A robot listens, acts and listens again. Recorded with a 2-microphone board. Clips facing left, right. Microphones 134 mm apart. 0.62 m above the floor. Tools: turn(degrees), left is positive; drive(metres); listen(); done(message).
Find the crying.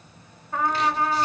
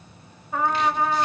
listen()
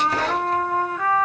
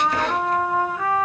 listen()
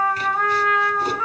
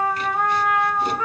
done("I can't make out crying to turn to.")